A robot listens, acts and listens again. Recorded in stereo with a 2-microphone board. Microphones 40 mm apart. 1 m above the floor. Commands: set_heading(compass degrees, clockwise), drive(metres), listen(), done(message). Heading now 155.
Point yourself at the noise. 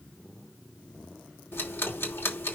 set_heading(65)
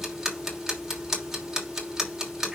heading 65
set_heading(75)
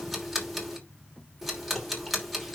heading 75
done("Facing the ticking, 2 to 4 m away.")